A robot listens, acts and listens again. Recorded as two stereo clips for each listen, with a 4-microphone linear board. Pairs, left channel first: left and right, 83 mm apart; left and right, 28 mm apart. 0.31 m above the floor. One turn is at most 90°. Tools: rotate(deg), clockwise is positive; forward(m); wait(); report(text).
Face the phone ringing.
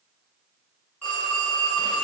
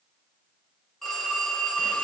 rotate(-20)
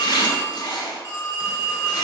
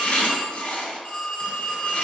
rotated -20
rotate(-90)
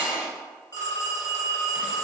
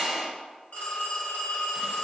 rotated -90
rotate(-55)
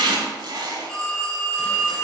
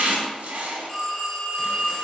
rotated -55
report("Facing the phone ringing.")